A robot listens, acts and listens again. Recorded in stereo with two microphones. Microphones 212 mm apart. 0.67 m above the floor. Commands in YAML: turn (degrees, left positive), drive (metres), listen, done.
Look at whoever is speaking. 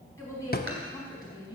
turn: 20
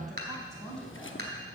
turn: 30
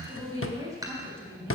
turn: -10
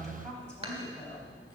listen: true
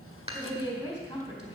turn: 15
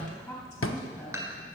done: "Facing the woman speaking."